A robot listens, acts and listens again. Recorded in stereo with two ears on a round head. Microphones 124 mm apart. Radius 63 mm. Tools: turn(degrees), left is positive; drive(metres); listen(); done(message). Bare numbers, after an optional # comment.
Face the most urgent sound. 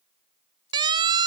# The siren: about 35° right or 145° right.
turn(-35)
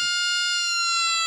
done("Facing the siren.")